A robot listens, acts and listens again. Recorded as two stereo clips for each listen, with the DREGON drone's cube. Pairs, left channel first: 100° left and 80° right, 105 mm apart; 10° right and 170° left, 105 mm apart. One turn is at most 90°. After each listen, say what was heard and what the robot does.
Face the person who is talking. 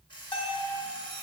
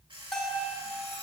Keep listening.
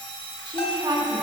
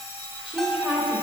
The woman speaking: 110° right. Turn 90° right.
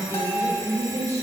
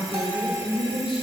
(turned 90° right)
The woman speaking is now 25° right. Turn 25° right.
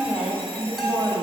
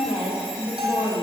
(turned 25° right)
Found it: a woman speaking, straight ahead.